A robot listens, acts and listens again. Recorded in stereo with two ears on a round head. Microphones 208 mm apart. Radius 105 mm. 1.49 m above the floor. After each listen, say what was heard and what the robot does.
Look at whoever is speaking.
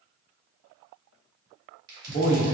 The man speaking: about 30° left or 150° left. Turn 30° left.
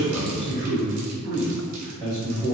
Found it: a man speaking, straight ahead.